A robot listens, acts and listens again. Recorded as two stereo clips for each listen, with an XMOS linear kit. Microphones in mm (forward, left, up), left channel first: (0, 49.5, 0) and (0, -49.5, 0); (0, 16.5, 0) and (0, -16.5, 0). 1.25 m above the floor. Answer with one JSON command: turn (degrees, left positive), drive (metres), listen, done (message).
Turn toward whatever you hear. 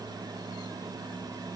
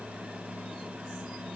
{"listen": true}
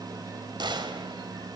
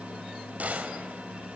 {"turn": -55}
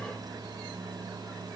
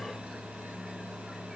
{"listen": true}
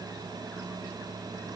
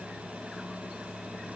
{"done": "I heard a gunshot, but can't make it out now. It was about straight ahead or 70° right."}